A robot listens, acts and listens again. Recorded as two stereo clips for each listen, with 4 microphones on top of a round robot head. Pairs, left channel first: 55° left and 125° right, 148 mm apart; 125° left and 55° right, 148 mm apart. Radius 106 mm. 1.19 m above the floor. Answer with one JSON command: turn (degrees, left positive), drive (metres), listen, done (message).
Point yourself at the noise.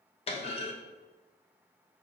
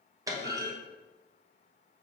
{"turn": 10}
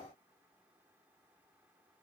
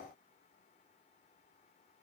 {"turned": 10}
{"done": "I heard a clunk from this way, but can't make it out now."}